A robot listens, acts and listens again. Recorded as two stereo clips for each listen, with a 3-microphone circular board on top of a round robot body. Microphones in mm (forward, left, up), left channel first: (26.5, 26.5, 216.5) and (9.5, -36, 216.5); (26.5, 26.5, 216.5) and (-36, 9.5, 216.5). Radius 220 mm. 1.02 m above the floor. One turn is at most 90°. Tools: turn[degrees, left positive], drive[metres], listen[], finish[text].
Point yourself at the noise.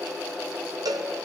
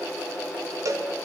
Thought: The cowbell: 125° right.
Action: turn[-90]
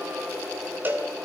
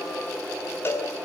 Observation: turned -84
Thought: The cowbell is now 45° right.
Action: turn[-45]
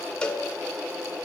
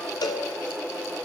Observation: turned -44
Action: finish[Found it: a cowbell, straight ahead, 1 to 2 m away.]